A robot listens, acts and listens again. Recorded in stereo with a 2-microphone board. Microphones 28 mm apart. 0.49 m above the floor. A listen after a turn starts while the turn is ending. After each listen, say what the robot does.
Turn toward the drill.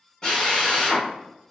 Turn 20° left.
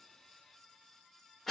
Facing the drill, under 1 m away.